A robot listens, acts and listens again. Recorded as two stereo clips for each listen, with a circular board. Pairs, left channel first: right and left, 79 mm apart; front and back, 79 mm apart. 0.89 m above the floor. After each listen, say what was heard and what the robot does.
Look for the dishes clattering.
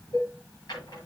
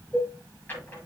The dishes clattering: 100° right. Turn 100° right.
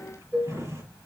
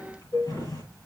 Found it: dishes clattering, straight ahead.